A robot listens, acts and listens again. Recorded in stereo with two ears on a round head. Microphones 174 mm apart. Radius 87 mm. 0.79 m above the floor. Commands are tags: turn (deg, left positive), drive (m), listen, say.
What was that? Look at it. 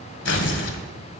<turn deg="65"/>
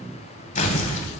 <turn deg="40"/>
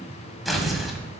<say>Found it: tearing paper, straight ahead, 1 to 2 m away.</say>